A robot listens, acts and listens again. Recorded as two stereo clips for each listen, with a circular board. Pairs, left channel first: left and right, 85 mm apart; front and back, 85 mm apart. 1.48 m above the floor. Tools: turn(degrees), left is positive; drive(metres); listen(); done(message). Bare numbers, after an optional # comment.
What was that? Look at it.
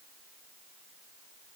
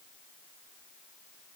listen()
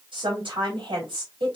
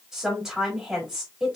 # The woman speaking: 95° right.
turn(-95)
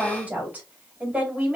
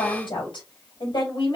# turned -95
# The woman speaking is now 20° right.
turn(-20)
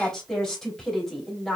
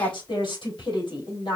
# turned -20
done("Facing the woman speaking.")